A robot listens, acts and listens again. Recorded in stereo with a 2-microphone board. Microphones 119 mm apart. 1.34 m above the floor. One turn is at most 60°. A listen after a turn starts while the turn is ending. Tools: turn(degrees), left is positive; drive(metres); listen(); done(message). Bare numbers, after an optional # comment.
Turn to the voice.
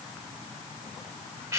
listen()
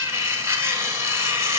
listen()
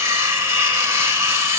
done("I can't make out anyone speaking to turn to.")